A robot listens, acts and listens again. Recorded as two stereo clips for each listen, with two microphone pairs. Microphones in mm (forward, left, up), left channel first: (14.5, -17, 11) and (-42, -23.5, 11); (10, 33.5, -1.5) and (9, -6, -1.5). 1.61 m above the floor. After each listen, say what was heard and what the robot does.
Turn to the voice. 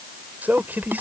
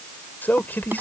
The man speaking: 130° left. Turn 130° left.
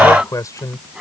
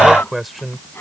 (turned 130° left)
Facing the man speaking.